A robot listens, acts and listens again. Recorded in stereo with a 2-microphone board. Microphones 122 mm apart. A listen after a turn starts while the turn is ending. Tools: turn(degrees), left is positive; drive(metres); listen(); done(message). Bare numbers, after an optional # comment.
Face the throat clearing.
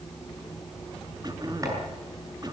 # The throat clearing: about 35° right or 145° right.
turn(-35)
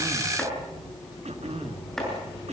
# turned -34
# So it is at 110° right.
turn(-110)
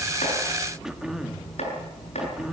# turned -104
done("Facing the throat clearing.")